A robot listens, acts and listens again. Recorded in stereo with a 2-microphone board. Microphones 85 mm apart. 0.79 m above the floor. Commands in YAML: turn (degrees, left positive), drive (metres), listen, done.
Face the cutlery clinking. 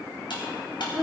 turn: 70
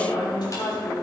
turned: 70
listen: true
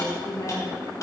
listen: true
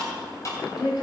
turn: 40
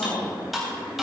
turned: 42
done: "Facing the cutlery clinking."